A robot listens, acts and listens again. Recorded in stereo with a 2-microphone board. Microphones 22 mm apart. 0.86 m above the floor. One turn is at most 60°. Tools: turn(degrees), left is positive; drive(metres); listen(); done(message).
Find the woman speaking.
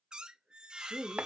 turn(degrees=30)
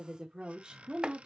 turn(degrees=-45)
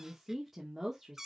turn(degrees=-15)
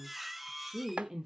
turn(degrees=-25)
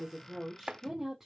turn(degrees=-15)
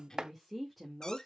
done("Found it: a woman speaking, straight ahead.")